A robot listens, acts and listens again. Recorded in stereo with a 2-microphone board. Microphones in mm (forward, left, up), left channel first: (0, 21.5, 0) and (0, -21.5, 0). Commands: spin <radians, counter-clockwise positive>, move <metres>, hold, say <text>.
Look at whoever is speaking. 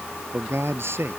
spin -1.57
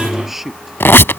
say Facing the man speaking.